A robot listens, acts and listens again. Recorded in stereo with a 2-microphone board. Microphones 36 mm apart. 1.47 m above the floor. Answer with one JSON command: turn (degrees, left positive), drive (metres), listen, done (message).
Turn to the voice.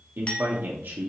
{"turn": -90}
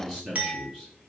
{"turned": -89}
{"done": "Facing the man speaking."}